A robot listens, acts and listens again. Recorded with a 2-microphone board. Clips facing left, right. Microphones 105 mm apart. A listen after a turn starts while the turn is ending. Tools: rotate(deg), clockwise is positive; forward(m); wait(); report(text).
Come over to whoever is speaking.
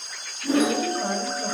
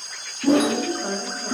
rotate(-45)
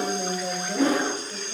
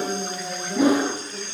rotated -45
rotate(-85)
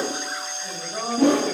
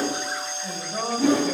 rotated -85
forward(1.0)
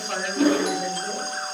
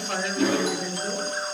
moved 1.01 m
forward(1.0)
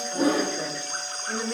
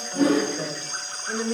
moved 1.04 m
forward(1.0)
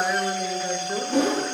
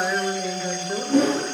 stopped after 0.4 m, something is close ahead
report("I am next to the woman speaking.")